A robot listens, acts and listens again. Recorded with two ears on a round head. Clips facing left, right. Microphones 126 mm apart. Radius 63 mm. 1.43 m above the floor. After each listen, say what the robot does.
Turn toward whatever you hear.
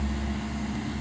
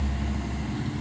Keep listening.
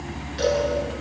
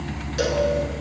Turn 50° right.
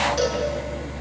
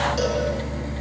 Facing the cowbell.